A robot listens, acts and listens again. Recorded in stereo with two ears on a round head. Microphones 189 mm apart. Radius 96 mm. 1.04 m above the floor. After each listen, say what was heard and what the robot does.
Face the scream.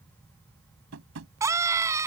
Turn 30° right.
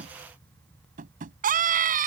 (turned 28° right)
So it is at 140° right. Turn 140° right.
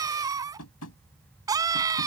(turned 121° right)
The scream is now 15° right. Turn 15° right.
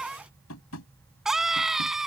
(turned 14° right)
Found it: a scream, straight ahead.